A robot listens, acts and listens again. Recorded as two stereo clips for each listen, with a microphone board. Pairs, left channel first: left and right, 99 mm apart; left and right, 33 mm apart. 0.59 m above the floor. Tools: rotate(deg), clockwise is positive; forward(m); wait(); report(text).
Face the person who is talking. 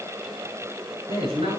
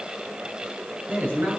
rotate(90)
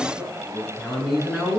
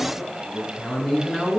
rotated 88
report("Found it: a man speaking, straight ahead.")